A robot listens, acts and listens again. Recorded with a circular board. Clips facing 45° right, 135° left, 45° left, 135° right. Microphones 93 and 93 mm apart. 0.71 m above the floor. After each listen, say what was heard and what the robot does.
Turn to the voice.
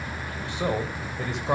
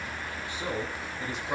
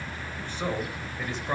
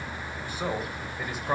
The man speaking: 50° right. Turn 50° right.
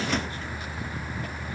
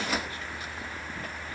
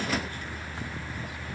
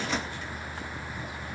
Keep listening.
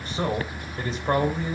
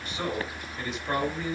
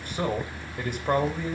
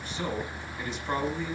The man speaking is now 10° left. Turn 10° left.
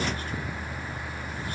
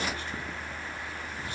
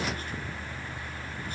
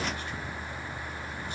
Keep listening.
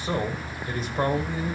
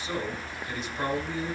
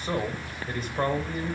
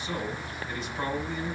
Found it: a man speaking, straight ahead.